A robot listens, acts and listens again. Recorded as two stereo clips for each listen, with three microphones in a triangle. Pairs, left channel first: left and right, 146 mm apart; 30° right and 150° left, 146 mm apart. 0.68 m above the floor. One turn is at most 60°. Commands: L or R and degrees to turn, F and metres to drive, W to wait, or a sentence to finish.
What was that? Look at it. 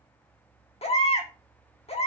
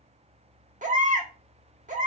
L60
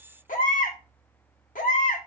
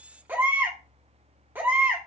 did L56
L60
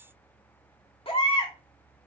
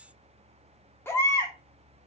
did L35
L40
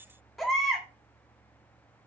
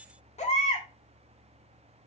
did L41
Found it: a baby crying, straight ahead.